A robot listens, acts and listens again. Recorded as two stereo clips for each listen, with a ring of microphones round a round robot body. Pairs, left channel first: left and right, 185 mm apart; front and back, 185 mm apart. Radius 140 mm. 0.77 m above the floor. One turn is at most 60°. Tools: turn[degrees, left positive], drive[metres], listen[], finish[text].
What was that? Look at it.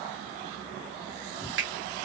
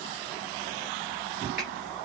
Thought: The finger snap: 90° right.
Action: turn[-60]
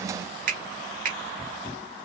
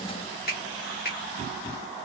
Thought: The finger snap is now 50° right.
Action: turn[-50]
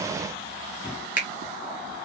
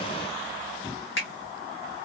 Thought: The finger snap is now 10° right.
Action: turn[-10]
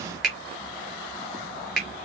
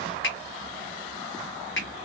Action: finish[Found it: a finger snap, straight ahead.]